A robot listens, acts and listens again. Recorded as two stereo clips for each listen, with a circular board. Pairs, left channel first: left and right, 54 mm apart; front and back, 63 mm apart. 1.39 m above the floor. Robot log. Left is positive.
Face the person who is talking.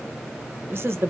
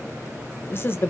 note: The woman speaking: 50° right.
cmd yaw -50
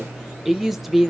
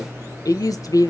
end: Found it: a woman speaking, straight ahead, under 1 m away.